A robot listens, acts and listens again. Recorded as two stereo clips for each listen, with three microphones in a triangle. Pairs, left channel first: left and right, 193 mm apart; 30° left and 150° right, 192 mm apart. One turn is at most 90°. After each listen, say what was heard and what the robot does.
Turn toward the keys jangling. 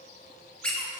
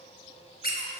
Keep listening.
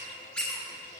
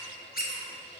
Keep listening.
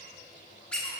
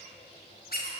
I can't make out keys jangling to turn to.